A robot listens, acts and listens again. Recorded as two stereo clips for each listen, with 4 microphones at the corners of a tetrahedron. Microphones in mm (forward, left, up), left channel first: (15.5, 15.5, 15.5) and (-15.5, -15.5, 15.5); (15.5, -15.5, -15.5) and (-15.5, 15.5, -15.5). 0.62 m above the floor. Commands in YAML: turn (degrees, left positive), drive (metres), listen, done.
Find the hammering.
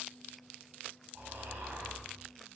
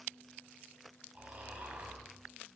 listen: true
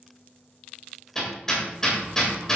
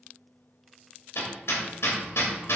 turn: -35
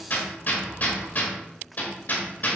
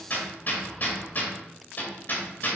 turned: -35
done: "Facing the hammering, 2 to 4 m away."